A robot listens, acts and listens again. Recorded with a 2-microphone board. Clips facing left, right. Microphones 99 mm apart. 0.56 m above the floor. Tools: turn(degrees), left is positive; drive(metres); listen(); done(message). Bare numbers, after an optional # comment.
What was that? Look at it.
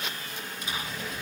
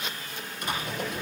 # The typing on a keyboard: about 65° right or 115° right.
turn(-65)
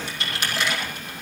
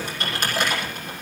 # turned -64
# So it is at 50° right.
turn(-50)
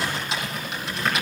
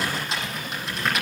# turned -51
done("Facing the typing on a keyboard.")